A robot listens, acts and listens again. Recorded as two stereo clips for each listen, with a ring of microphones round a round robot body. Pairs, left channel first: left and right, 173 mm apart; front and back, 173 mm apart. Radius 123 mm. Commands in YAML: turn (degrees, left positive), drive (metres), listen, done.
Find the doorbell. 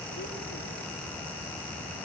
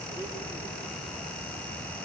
listen: true
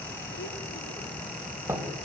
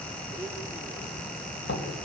turn: -15
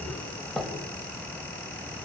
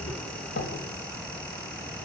done: "Facing the doorbell."